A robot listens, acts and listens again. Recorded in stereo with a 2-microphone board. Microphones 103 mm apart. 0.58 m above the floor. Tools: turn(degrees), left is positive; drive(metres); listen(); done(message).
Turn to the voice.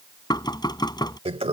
listen()
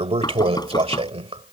listen()
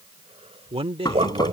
turn(degrees=-60)
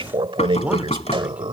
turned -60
turn(degrees=-15)
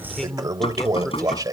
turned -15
done("Found it: a man speaking, straight ahead.")